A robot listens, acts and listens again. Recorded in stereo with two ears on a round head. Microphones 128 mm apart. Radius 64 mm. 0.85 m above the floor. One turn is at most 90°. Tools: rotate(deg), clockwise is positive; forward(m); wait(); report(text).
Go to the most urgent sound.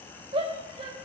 rotate(40)
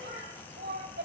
rotate(90)
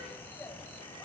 rotate(10)
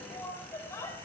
rotate(-20)
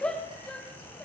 forward(1.0)
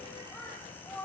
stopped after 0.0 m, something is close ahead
rotate(-10)
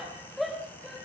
report("Something is in my way. I am facing the shout but have not reached it.")